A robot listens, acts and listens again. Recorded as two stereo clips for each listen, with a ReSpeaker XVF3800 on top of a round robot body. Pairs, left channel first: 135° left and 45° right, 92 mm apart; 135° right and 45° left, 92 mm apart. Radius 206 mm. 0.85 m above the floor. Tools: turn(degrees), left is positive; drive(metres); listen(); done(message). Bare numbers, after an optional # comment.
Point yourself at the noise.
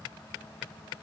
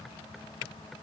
listen()
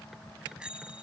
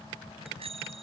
# The bicycle bell: 35° left.
turn(35)
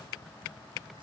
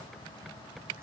listen()
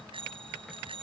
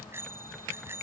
# The bicycle bell is now 20° right.
turn(-20)
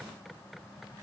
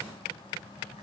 listen()
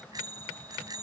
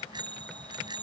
done("Facing the bicycle bell.")